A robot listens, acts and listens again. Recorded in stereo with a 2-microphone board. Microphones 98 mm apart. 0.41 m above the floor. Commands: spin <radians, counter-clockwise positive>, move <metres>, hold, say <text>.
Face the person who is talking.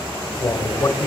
spin 0.52
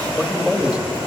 spin -0.17
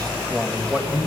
spin -0.26
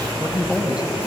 spin -0.17
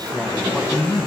say Found it: a man speaking, straight ahead, 2 to 4 m away.